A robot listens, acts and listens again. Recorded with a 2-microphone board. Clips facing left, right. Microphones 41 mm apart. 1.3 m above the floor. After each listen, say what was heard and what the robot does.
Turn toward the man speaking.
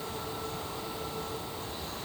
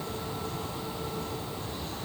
Keep listening.
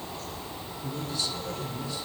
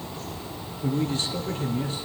The man speaking: about 50° right or 130° right. Turn 50° right.
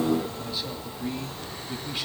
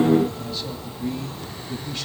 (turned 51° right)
So it is at 15° left. Turn 15° left.
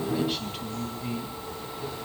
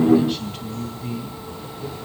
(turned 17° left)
Found it: a man speaking, straight ahead, 2 to 4 m away.